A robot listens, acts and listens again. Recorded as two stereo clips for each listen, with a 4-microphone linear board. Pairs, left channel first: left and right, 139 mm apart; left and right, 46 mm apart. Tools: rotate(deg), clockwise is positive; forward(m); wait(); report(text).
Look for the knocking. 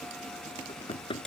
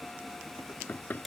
rotate(-40)
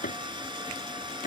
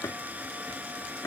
rotate(-100)
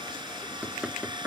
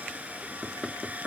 rotate(10)
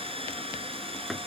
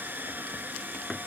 report("Facing the knocking.")